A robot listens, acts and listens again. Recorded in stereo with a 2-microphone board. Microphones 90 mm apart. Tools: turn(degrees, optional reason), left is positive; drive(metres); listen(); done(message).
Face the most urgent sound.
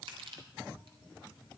listen()
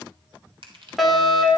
turn(degrees=30)
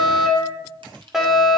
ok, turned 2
turn(degrees=-30)
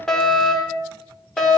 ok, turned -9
turn(degrees=30)
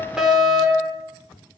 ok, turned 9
done("Facing the fire alarm, over 4 m away.")